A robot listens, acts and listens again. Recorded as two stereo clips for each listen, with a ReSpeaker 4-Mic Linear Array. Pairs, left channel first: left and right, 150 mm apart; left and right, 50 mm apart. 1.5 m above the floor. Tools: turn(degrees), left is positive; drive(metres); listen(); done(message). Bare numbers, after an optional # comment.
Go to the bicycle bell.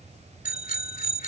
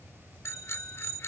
# The bicycle bell: about 65° left or 115° left.
turn(65)
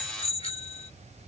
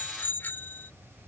# So it is at 50° left.
turn(50)
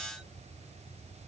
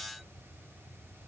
listen()
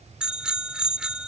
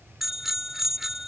drive(1.0)
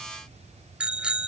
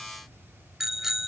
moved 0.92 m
drive(1.0)
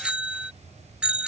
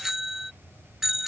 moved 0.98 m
# The bicycle bell is now 10° right.
turn(-10)
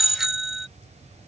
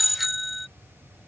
drive(1.0)
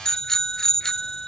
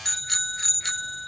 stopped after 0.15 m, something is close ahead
done("Arrived at the bicycle bell, straight ahead.")